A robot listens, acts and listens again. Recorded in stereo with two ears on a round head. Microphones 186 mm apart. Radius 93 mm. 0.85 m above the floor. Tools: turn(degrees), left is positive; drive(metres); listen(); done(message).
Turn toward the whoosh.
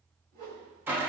turn(degrees=-45)
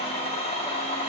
listen()
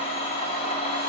listen()
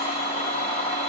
done("I heard a whoosh, but can't make it out now. It was about straight ahead or 90° right.")